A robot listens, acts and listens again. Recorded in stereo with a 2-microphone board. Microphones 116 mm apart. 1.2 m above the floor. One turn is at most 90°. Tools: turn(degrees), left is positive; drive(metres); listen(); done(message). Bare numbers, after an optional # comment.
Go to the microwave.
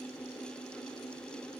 listen()
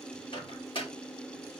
# The microwave: about 45° left or 135° left.
turn(45)
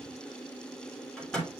drive(1.0)
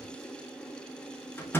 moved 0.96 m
# The microwave is now 20° left.
turn(20)
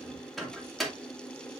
drive(1.0)
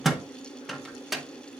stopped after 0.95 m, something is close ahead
done("Arrived at the microwave, straight ahead.")